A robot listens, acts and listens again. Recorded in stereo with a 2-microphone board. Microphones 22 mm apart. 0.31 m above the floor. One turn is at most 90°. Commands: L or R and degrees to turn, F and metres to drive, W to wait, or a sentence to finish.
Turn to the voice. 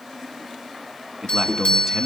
R30
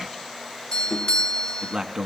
R90
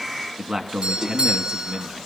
R35
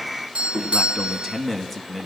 Found it: a man speaking, straight ahead.